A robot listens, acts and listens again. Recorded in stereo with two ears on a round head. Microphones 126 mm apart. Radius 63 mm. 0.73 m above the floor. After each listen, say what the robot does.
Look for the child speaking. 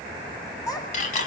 Turn 30° left.
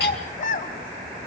Turn 115° left.
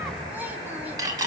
Keep listening.
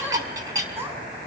Turn 20° right.
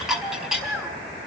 Found it: a child speaking, straight ahead.